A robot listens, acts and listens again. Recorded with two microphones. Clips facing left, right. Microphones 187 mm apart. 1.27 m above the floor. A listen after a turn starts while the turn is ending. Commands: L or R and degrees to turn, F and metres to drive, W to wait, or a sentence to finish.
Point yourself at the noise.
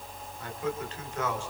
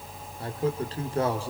R35
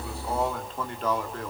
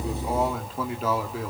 Found it: a man speaking, straight ahead.